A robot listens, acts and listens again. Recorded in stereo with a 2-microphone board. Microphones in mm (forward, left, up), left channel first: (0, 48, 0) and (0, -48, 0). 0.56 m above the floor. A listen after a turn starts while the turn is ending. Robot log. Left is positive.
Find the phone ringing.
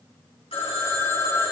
cmd yaw +90
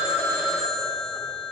end: Found it: a phone ringing, straight ahead.